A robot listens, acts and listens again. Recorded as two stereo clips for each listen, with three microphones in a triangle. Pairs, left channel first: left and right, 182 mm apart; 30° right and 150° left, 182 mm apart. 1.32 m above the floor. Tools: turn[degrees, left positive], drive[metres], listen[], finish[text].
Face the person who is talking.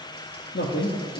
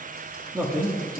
Thought: The man speaking: 75° left.
Action: turn[75]
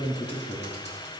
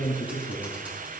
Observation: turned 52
Thought: The man speaking is now 25° left.
Action: turn[25]
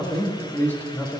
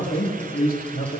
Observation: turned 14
Thought: The man speaking is now 10° left.
Action: turn[10]
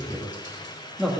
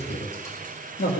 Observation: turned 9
Action: finish[Facing the man speaking.]